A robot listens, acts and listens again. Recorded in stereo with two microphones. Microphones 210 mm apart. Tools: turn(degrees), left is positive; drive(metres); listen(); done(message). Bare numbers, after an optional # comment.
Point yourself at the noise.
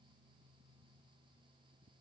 listen()
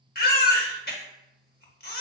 # The baby crying: about 45° left or 135° left.
turn(45)
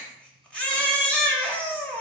done("Facing the baby crying.")